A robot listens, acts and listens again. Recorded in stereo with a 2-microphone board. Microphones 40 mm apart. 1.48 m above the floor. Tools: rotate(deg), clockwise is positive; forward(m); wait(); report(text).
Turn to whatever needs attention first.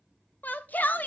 rotate(-50)
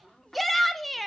report("Facing the shout, 1 to 2 m away.")